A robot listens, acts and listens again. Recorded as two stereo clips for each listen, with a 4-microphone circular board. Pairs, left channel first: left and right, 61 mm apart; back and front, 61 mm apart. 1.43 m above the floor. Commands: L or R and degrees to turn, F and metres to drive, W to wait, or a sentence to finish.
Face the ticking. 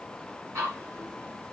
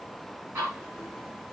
R45
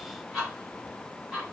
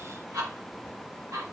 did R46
Facing the ticking, 2 to 4 m away.